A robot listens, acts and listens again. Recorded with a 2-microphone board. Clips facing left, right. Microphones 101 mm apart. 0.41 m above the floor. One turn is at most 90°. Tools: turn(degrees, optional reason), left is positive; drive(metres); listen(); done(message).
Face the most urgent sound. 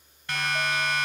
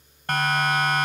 turn(degrees=-55, reason="The siren: about 55° right or 125° right.")
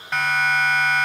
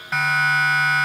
done("Facing the siren, 2 to 4 m away.")